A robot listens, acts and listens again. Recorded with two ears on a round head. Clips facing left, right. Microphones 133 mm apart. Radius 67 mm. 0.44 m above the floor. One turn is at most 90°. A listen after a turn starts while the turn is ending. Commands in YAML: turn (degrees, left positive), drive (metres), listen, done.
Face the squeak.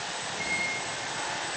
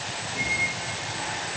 turn: -20
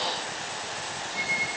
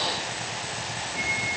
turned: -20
done: "Found it: a squeak, straight ahead, over 4 m away."